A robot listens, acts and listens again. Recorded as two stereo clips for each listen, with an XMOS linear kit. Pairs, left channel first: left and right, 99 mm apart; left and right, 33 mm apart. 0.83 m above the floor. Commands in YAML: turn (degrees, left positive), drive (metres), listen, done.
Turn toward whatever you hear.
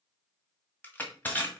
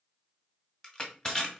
turn: 20
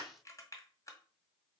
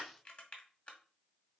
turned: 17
listen: true
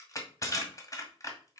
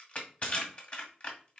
turn: 145
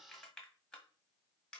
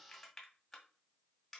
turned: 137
turn: 10
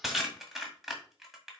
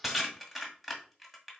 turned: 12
done: "Facing the crushing."